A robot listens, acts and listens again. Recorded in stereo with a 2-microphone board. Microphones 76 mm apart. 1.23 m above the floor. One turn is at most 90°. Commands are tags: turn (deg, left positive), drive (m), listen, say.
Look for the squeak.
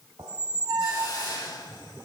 <turn deg="-65"/>
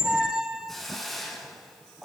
<turn deg="-10"/>
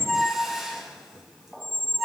<say>Found it: a squeak, straight ahead.</say>